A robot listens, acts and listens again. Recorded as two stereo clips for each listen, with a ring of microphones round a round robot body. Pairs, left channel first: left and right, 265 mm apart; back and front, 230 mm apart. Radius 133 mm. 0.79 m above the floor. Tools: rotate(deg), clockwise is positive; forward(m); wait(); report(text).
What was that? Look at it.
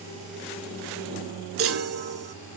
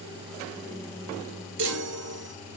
rotate(50)
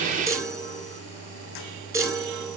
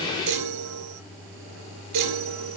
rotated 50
rotate(10)
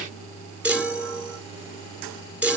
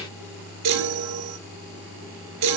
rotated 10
report("Facing the chime.")